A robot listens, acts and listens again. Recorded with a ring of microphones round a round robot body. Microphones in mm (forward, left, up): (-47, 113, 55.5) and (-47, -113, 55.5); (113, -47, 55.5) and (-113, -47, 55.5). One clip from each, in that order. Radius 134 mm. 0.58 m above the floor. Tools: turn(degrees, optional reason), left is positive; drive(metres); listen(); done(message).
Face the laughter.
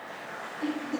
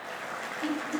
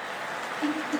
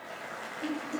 turn(degrees=45, reason="The laughter: 45° left.")
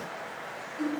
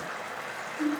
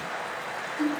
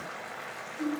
turn(degrees=25, reason="The laughter is now 25° left.")
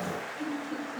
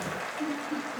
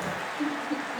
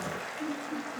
done("Found it: laughter, straight ahead, 2 to 4 m away.")